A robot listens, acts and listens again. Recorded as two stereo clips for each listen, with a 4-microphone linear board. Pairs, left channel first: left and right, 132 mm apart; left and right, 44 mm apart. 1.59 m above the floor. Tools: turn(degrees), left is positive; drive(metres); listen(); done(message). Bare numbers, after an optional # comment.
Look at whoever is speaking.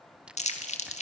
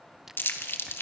listen()
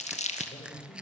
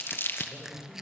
# The man speaking: about 45° left or 135° left.
turn(45)
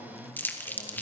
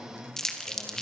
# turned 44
listen()
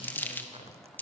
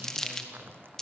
listen()
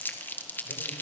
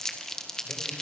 done("I heard a man speaking, but can't make it out now. It was about straight ahead or 90° left.")